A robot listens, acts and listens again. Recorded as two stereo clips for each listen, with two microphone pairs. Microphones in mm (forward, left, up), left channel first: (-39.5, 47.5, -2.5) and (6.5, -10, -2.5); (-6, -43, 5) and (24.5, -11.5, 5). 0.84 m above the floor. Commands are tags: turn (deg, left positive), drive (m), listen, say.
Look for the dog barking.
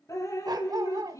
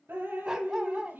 <turn deg="-25"/>
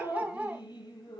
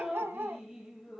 <turn deg="25"/>
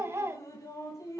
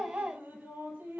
<say>Found it: a dog barking, straight ahead.</say>